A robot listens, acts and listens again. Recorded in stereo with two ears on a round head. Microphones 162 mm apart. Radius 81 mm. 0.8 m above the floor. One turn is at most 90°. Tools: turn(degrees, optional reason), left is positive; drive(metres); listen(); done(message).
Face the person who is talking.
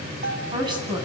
turn(degrees=-25, reason="The woman speaking: about 25° right or 155° right.")
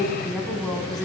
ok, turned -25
done("Found it: a woman speaking, straight ahead.")